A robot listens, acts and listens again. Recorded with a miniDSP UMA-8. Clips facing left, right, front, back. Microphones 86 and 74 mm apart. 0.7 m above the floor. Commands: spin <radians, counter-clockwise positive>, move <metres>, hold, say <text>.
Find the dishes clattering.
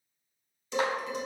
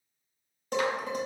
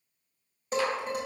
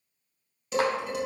spin -0.87
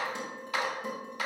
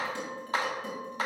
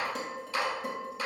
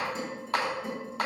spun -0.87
spin 0.35
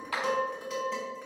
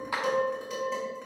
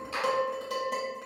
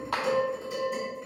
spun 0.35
say Found it: dishes clattering, straight ahead, 2 to 4 m away.